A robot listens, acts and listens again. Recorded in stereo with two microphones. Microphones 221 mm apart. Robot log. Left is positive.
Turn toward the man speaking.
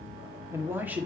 cmd yaw -30
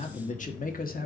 note: So it is at 45° left.
cmd yaw +45
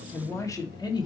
note: The man speaking is now 20° left.
cmd yaw +20
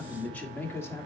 note: The man speaking is now 10° left.
cmd yaw +10
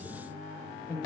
note: The man speaking is now 15° left.
cmd yaw +15
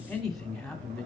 end: Facing the man speaking.